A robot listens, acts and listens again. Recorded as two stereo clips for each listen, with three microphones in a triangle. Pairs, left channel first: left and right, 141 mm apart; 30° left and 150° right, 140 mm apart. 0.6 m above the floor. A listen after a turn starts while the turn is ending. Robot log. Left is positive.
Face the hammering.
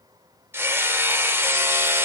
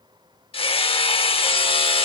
note: The hammering: 20° right.
cmd yaw -20
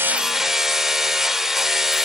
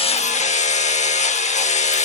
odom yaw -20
end: Found it: hammering, straight ahead, under 1 m away.